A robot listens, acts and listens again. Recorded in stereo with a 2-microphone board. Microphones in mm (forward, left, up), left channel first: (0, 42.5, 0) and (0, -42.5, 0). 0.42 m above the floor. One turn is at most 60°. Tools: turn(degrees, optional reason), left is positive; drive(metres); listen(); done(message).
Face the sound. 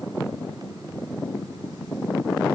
listen()
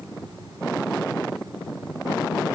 listen()
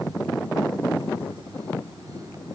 done("I can't make out anything.")